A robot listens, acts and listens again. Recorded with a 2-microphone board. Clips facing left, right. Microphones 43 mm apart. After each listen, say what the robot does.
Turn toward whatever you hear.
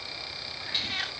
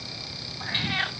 Turn 25° right.
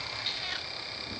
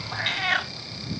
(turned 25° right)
Turn 130° right.
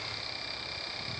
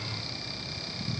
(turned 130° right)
Keep listening.
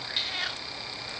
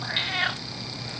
Turn 30° right.
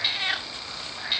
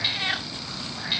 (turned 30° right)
Facing the cat meowing.